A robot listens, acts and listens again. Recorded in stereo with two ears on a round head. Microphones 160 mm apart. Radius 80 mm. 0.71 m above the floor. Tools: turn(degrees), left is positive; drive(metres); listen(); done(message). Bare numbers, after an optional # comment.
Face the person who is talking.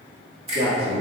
# The man speaking: about 65° right or 115° right.
turn(-65)
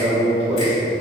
# So it is at 35° right.
turn(-35)
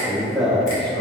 done("Facing the man speaking.")